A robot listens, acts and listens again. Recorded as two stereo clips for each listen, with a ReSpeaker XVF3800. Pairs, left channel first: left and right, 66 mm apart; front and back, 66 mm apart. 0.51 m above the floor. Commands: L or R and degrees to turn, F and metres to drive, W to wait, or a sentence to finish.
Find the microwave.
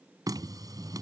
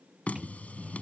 R100
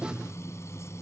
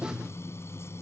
L15
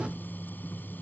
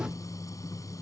Found it: a microwave, straight ahead.